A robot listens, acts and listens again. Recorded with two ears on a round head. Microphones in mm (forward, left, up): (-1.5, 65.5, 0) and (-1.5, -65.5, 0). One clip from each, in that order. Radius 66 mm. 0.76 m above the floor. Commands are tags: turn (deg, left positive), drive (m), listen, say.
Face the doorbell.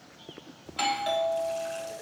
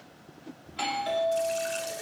<turn deg="20"/>
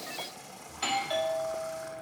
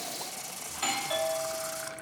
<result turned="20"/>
<say>Found it: a doorbell, straight ahead.</say>